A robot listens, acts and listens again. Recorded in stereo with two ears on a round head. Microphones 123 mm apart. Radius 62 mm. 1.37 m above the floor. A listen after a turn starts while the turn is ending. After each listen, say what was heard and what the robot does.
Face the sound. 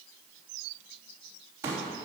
The pop: about 20° right or 160° right. Turn 20° right.
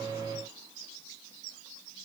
Keep listening.
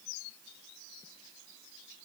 I heard a pop, but can't make it out now. It was about straight ahead or 140° right.